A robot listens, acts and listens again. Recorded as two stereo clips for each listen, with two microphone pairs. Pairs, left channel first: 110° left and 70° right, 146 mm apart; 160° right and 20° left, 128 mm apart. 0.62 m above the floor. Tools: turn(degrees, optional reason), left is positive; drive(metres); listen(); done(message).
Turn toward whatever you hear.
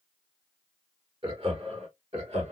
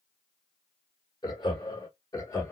turn(degrees=-100, reason="The laughter: 100° right.")
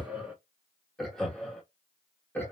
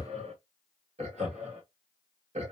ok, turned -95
turn(degrees=35, reason="The laughter is now 35° left.")
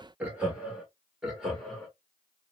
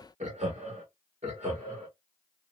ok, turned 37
turn(degrees=15, reason="The laughter is now 15° left.")
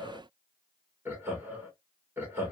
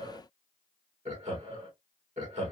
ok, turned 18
done("Found it: laughter, straight ahead.")